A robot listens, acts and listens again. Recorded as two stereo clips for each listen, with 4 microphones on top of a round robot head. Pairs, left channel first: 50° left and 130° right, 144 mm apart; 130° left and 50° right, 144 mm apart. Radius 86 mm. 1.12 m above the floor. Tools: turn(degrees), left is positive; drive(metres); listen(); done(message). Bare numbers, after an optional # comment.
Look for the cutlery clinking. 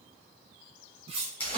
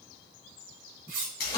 # The cutlery clinking: 80° right.
turn(-80)
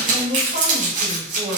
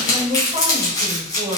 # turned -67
# Nothing new. It was at 15° right.
turn(-15)
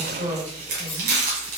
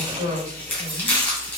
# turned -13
listen()
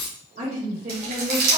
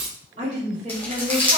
done("Found it: cutlery clinking, straight ahead, under 1 m away.")